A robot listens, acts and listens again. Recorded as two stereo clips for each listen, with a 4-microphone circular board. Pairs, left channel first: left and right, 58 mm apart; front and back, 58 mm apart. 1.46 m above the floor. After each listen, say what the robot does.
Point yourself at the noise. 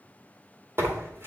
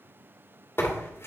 Turn 45° right.
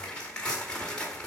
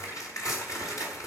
Turn 15° left.
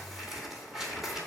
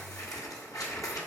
Facing the tearing paper.